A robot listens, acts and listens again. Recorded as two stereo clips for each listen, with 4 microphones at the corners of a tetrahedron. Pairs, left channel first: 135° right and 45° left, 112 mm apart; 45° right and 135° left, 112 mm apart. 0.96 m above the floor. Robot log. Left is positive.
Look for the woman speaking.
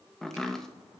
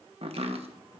cmd idle
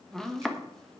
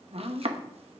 cmd idle
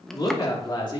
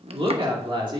note: The woman speaking: straight behind.
cmd yaw +180
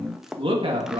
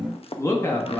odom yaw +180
note: The woman speaking is now 20° left.
cmd yaw +20
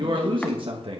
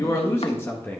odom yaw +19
note: The woman speaking is now 25° left.
cmd yaw +25
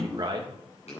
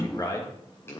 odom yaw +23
end: Found it: a woman speaking, straight ahead.